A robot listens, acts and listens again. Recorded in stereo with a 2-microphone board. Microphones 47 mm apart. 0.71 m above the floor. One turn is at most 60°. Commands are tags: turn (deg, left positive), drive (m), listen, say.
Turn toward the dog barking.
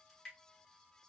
<listen/>
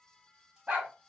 <turn deg="-30"/>
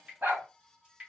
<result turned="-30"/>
<turn deg="-60"/>
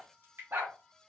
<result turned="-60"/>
<turn deg="-60"/>
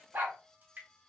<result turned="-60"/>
<turn deg="-45"/>
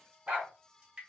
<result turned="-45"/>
<turn deg="-25"/>
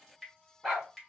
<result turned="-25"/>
<say>Found it: a dog barking, straight ahead.</say>